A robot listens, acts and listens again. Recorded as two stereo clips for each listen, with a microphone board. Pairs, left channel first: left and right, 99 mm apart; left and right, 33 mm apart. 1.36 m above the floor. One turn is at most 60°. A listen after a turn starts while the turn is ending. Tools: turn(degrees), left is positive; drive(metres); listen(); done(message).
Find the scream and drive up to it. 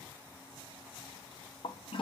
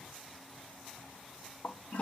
listen()
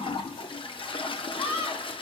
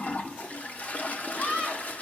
turn(degrees=60)
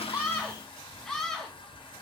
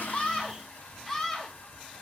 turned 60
drive(metres=1.0)
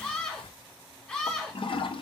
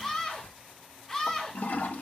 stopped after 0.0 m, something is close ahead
turn(degrees=10)
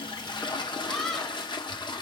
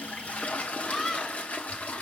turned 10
done("Something is in my way. I am facing the scream but have not reached it.")